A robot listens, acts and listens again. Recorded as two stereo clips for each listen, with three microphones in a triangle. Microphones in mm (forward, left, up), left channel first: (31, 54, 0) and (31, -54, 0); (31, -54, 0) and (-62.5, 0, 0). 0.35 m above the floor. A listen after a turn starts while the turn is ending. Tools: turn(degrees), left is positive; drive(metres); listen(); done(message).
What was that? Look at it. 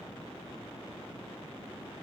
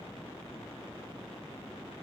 listen()
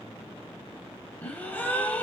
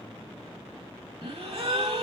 turn(degrees=160)
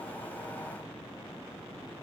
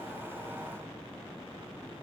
done("Facing where the gasp came from. I can't hear it now.")